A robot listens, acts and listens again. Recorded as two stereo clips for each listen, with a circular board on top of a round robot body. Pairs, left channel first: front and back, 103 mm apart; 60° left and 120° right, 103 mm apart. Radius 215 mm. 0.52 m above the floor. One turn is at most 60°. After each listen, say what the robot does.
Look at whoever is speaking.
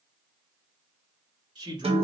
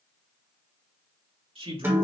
Turn 60° right.
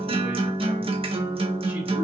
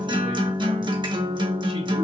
Turn 60° right.
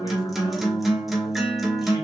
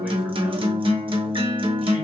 Turn 20° right.
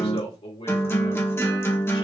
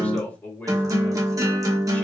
Turn 15° right.
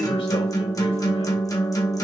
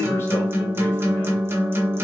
Keep listening.
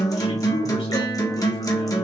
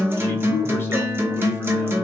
Facing the man speaking, 2 to 4 m away.